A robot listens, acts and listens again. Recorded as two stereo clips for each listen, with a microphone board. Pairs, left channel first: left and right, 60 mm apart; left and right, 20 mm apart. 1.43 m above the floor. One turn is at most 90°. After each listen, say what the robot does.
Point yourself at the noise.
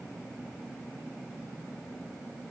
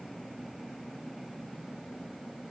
Keep listening.
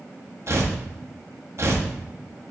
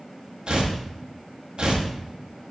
Turn 50° right.
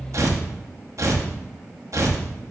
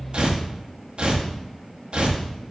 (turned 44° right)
Turn 75° right.
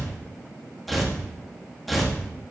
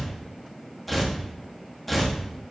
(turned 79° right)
Found it: tearing paper, straight ahead.